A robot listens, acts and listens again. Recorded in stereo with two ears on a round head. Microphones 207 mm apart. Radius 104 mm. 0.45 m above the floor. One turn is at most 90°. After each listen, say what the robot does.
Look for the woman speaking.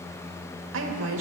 Turn 60° right.
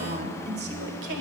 Turn 55° right.
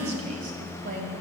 Turn 40° right.
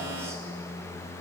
Keep listening.
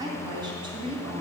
Turn 25° right.
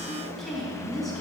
Facing the woman speaking, 2 to 4 m away.